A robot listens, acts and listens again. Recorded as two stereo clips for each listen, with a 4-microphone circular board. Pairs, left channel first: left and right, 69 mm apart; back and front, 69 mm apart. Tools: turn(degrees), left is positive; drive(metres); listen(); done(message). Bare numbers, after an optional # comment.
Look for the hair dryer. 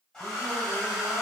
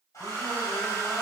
# The hair dryer: 170° left.
turn(170)
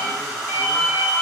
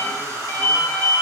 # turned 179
done("Found it: a hair dryer, straight ahead, 1 to 2 m away.")